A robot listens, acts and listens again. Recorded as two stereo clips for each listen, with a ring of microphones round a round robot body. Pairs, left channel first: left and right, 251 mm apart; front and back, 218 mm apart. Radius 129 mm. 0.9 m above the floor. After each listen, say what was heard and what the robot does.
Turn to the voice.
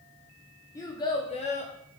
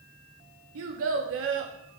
The child speaking: 150° left. Turn 150° left.
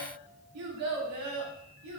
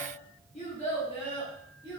The child speaking is now 75° right. Turn 75° right.
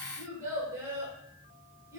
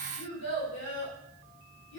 The child speaking is now 10° right. Turn 10° right.
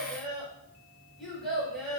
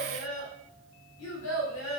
Found it: a child speaking, straight ahead, 2 to 4 m away.